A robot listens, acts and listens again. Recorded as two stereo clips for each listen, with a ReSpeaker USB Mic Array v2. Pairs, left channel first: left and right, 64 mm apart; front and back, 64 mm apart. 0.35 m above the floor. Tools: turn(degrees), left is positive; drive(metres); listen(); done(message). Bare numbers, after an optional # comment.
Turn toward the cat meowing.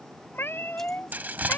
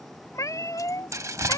# The cat meowing: 30° left.
turn(30)
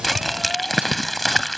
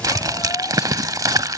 listen()
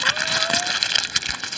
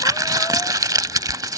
listen()
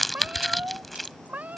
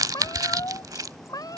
# The cat meowing is now 20° right.
turn(-20)
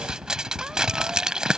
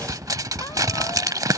listen()
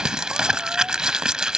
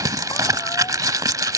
listen()
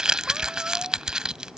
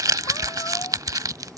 done("Facing where the cat meowing came from. I can't hear it now.")